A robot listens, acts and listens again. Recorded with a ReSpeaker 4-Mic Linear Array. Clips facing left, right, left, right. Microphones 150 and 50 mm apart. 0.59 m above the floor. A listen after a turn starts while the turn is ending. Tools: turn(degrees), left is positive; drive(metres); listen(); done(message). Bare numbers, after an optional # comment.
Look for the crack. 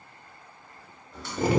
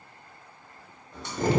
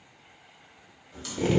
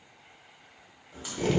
# The crack: about 20° right or 160° right.
turn(-20)
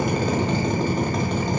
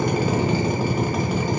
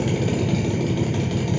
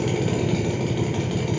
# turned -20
listen()
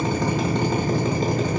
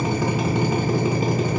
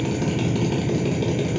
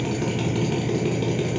done("I heard a crack, but can't make it out now. It was about straight ahead or 140° right.")